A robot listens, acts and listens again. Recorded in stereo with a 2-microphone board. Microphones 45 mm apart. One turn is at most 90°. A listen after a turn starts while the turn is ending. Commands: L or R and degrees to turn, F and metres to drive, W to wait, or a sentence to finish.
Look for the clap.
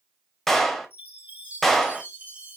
L30
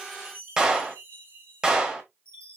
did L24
R20
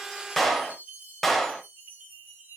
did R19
Found it: a clap, straight ahead, 1 to 2 m away.